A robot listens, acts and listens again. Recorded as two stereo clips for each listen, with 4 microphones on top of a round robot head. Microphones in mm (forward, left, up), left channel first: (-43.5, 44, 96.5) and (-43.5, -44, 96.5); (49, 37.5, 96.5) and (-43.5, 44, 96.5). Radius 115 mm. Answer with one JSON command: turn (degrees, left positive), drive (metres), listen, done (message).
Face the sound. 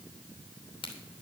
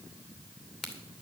{"turn": 80}
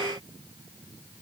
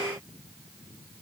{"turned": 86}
{"done": "I heard a crack from this way, but can't make it out now."}